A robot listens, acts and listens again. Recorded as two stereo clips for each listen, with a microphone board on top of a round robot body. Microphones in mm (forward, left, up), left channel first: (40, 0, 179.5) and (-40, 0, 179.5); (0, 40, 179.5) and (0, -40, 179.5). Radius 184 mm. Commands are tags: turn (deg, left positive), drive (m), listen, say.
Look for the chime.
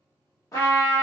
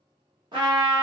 <listen/>
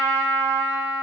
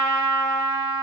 <listen/>
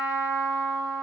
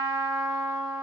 <say>I can't make out a chime, only a trumpet.</say>